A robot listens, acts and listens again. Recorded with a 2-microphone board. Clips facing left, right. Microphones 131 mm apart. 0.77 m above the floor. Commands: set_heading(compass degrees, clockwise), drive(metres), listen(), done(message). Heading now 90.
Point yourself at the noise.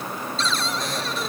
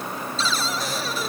set_heading(120)
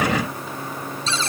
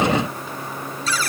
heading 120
set_heading(95)
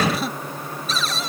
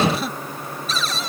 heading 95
done("Found it: a cupboard door, straight ahead.")